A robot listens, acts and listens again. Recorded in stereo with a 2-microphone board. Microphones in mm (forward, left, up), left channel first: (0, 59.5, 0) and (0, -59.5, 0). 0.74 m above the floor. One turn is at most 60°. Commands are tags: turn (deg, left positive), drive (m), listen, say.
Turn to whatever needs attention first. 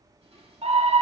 <turn deg="-60"/>
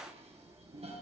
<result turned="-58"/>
<listen/>
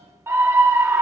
<turn deg="-25"/>
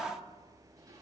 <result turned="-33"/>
<turn deg="10"/>
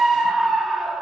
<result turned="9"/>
<say>Facing the scream.</say>